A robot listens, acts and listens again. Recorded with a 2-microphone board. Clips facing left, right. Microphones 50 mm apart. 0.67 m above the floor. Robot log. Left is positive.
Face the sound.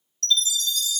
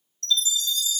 note: The chime: about 65° left or 115° left.
cmd yaw +65
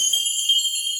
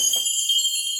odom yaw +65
note: So it is at 45° left.
cmd yaw +45
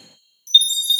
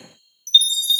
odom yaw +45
end: Found it: a chime, straight ahead.